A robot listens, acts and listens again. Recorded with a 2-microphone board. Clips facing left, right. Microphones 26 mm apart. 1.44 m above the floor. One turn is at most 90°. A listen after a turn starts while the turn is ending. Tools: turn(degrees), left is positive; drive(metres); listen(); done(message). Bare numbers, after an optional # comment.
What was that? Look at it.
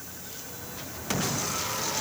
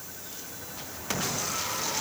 listen()
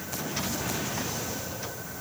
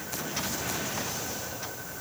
listen()
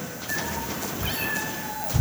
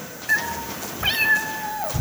# The cat meowing: about 60° right or 120° right.
turn(-60)
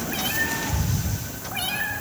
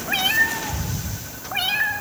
# So it is at 35° right.
turn(-35)
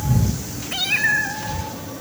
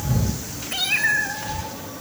done("Facing the cat meowing, 2 to 4 m away.")